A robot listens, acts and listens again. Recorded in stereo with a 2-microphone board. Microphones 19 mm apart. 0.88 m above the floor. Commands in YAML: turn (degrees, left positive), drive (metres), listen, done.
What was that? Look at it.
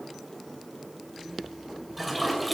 turn: 30
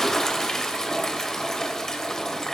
turn: 145
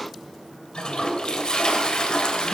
turn: 50
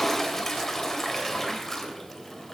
turn: 15
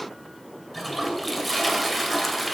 done: "Found it: a toilet flushing, straight ahead."